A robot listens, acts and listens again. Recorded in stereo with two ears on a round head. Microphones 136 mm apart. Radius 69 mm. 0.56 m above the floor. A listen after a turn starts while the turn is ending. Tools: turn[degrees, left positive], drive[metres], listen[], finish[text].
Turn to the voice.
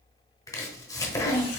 Thought: The child speaking: about 25° right or 155° right.
Action: turn[-25]
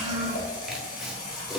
Thought: So it is at 130° right.
Action: turn[-130]
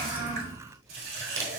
Action: listen[]
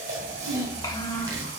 Thought: The child speaking is now 25° left.
Action: turn[25]
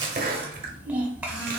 Thought: The child speaking is now 10° right.
Action: turn[-10]
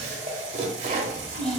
Action: finish[Facing the child speaking.]